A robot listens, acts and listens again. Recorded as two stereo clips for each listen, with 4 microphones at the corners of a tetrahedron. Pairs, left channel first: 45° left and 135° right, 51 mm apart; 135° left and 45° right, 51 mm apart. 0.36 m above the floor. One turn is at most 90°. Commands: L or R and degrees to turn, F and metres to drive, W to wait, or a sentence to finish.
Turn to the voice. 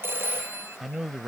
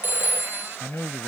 L90
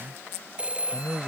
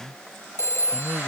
L35
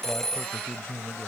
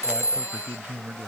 Found it: a man speaking, straight ahead.